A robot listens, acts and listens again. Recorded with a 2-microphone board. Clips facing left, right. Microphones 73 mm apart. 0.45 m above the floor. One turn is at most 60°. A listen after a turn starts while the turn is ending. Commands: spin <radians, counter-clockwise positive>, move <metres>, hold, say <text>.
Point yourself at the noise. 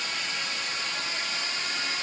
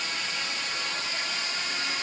hold
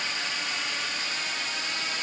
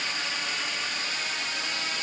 hold
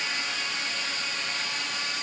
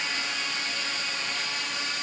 say I can't make out anything to turn to.